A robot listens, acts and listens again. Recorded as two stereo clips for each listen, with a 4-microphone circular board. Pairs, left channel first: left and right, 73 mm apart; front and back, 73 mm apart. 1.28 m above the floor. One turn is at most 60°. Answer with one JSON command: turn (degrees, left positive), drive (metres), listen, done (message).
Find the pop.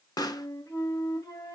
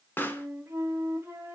{"turn": 60}
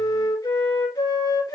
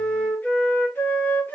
{"done": "I heard a pop from this way, but can't make it out now."}